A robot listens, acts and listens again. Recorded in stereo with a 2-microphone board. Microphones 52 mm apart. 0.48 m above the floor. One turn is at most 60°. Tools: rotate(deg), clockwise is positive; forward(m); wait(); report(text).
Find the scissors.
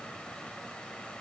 wait()
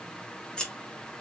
rotate(-30)
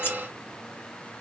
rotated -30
rotate(-60)
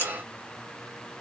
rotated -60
rotate(-60)
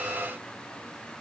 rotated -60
rotate(-10)
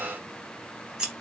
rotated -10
rotate(10)
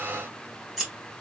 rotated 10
report("Facing the scissors.")